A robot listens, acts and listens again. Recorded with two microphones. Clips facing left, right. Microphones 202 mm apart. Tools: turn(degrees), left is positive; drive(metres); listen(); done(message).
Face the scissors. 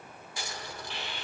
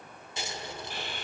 turn(degrees=-25)
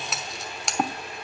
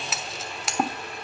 done("Found it: scissors, straight ahead.")